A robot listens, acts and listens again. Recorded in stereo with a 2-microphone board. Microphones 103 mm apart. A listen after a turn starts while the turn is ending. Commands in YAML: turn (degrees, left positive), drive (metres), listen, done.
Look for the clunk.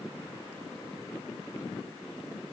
listen: true
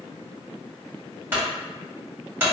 turn: -20
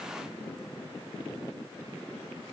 listen: true
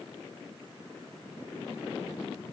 done: "I heard a clunk, but can't make it out now. It was about straight ahead or 140° right."